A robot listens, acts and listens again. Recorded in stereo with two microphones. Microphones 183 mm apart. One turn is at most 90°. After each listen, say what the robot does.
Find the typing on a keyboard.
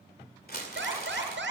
Keep listening.
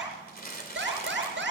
Keep listening.
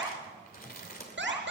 I can't make out typing on a keyboard to turn to.